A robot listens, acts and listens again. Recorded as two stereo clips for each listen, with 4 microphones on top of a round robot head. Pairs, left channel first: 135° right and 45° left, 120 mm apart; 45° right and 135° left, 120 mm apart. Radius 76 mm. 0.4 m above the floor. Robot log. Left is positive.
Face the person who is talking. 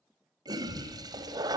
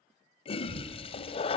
note: The child speaking: 75° left.
cmd yaw +75
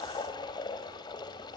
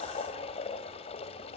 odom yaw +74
cmd idle
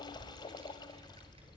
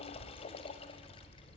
end: Facing the child speaking.